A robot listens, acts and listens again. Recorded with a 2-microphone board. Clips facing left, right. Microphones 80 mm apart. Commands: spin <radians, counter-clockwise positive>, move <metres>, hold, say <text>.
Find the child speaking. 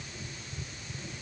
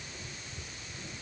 hold
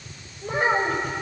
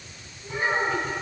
spin 1.13
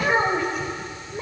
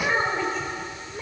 spin 0.17
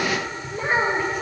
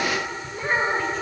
spin 0.17
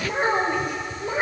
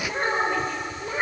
spin 0.17
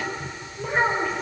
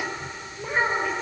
say Found it: a child speaking, straight ahead, over 4 m away.